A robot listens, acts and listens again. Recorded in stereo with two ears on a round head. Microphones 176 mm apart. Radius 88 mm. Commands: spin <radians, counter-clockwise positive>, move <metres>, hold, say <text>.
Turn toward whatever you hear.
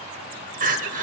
spin -0.70
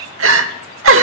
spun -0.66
spin -1.75
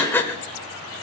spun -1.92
spin 0.17
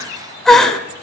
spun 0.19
say Found it: crying, straight ahead.